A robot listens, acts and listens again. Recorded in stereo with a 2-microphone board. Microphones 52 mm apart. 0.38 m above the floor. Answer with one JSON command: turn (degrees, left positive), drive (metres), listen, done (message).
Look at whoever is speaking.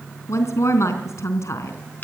{"turn": 65}
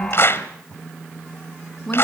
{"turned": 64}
{"turn": 10}
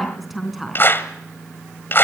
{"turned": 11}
{"done": "Facing the woman speaking."}